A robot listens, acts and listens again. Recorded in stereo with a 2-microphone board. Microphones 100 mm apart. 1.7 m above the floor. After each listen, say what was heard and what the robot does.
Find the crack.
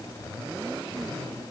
Keep listening.
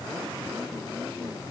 Keep listening.
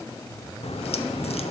Turn 90° left.
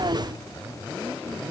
Facing where the crack came from. I can't hear it now.